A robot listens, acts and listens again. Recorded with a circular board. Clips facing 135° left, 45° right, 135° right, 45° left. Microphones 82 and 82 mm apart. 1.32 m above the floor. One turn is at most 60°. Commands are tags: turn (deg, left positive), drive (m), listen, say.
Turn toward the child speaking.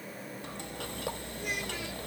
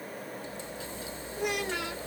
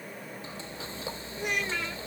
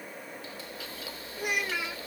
<turn deg="-35"/>
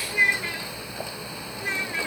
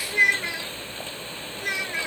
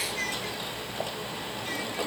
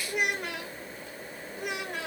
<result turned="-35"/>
<turn deg="30"/>
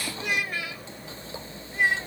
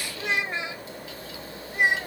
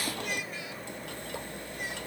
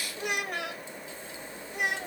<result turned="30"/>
<turn deg="25"/>
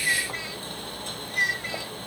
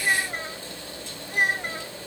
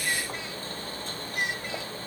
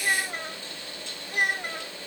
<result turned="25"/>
<say>Facing the child speaking.</say>